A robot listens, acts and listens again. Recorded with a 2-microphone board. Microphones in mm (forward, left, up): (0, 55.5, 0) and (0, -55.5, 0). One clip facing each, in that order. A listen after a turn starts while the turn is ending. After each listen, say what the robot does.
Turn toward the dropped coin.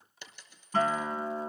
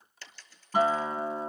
Turn 20° left.
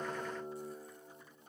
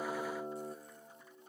Keep listening.
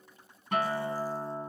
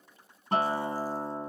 I heard a dropped coin, but can't make it out now. It was about straight ahead or 140° left.